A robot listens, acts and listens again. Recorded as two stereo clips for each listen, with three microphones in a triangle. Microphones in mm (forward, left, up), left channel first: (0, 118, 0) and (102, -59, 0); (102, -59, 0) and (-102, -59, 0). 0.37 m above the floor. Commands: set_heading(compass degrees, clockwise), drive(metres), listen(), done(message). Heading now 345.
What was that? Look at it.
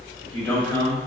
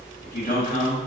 set_heading(300)
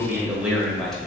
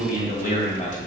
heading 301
set_heading(266)
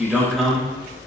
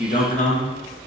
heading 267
set_heading(232)
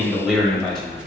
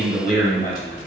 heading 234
set_heading(199)
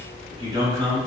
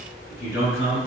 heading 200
set_heading(190)
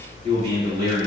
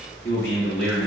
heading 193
done("Facing the man speaking, 2 to 4 m away.")